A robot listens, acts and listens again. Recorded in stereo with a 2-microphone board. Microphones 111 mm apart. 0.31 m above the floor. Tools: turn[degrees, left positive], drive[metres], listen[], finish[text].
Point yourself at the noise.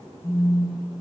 Thought: The phone buzzing: about 35° left or 145° left.
Action: turn[35]
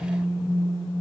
Action: finish[Facing the phone buzzing.]